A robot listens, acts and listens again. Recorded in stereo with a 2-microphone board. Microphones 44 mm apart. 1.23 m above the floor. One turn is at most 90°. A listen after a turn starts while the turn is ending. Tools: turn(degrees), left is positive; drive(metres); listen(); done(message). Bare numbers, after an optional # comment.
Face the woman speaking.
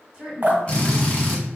# The woman speaking: about 15° right or 165° right.
turn(-15)
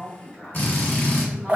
# So it is at 150° right.
turn(-90)
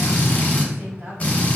# Nothing new. It was at 60° right.
turn(-60)
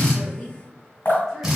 listen()
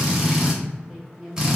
done("Facing the woman speaking, 1 to 2 m away.")